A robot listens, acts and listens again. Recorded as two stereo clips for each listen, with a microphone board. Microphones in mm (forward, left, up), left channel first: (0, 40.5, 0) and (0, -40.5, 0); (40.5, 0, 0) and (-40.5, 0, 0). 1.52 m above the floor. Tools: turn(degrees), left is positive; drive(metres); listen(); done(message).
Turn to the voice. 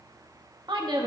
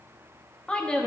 turn(degrees=-80)
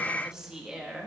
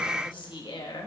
turn(degrees=-10)
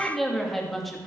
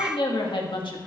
done("Found it: a woman speaking, straight ahead, 2 to 4 m away.")